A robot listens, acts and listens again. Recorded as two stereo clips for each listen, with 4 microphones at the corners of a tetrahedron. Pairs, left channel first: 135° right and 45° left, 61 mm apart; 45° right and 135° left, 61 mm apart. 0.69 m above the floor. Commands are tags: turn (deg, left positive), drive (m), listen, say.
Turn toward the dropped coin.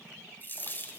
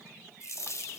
<turn deg="-80"/>
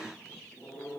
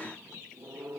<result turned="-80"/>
<say>Facing where the dropped coin came from. I can't hear it now.</say>